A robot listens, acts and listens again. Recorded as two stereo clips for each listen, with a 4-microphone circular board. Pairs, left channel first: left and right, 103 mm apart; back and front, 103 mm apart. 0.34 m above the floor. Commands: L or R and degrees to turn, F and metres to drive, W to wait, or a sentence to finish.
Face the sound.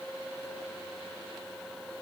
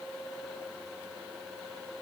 W
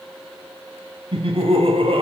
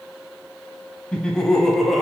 R90
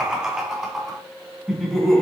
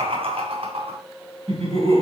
Facing the laughter.